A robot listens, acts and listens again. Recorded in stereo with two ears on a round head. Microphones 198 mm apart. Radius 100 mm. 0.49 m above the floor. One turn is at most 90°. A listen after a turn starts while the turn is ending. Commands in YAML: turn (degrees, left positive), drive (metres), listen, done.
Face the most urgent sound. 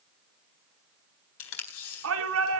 turn: -75
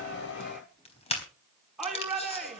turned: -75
done: "Found it: a shout, straight ahead, over 4 m away."